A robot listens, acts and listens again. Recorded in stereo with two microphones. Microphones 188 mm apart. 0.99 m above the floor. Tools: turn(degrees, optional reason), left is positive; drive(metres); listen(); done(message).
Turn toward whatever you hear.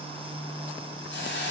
turn(degrees=70, reason="The hiss: about 70° left or 110° left.")
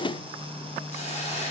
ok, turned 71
turn(degrees=35, reason="So it is at 35° left.")
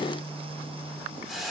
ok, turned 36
done("Found it: a hiss, straight ahead.")